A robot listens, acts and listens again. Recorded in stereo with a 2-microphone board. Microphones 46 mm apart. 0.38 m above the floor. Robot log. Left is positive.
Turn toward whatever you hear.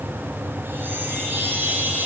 note: The chime: about 50° right or 130° right.
cmd yaw -50
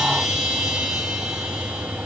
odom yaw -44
end: Found it: a chime, straight ahead.